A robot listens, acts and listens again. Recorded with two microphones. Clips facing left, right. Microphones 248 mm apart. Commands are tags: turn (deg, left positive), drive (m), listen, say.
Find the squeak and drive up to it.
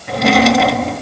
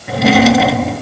<listen/>
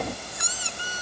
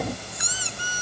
<turn deg="65"/>
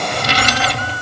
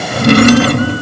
<listen/>
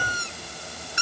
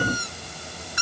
<turn deg="30"/>
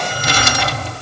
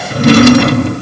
<listen/>
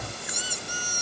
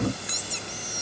<drive m="1.0"/>
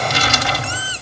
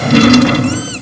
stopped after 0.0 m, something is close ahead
<listen/>
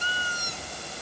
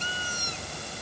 <turn deg="10"/>
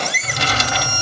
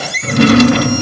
<say>Something is in my way. I am facing the squeak but have not reached it.</say>